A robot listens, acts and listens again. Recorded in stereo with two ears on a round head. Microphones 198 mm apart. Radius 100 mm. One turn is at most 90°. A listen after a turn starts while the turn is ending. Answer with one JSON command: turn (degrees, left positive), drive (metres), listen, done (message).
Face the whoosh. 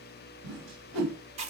{"turn": -65}
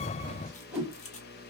{"done": "Facing the whoosh, 2 to 4 m away."}